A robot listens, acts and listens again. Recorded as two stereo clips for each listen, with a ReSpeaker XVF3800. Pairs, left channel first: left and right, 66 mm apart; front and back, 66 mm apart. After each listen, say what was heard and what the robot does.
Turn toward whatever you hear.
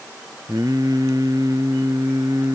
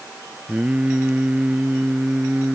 The singing: 110° right. Turn 110° right.
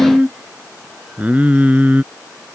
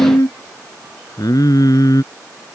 The singing is now 25° right. Turn 25° right.
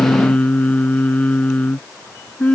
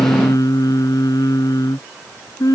The singing is now 20° left. Turn 20° left.
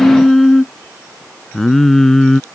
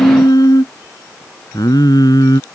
Facing the singing.